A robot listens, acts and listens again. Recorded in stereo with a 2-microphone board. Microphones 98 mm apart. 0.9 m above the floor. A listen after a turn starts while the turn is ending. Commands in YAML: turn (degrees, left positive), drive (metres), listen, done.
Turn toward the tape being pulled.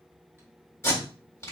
turn: 30
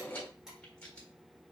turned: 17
listen: true
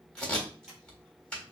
turn: 10
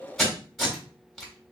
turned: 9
done: "Found it: tape being pulled, straight ahead."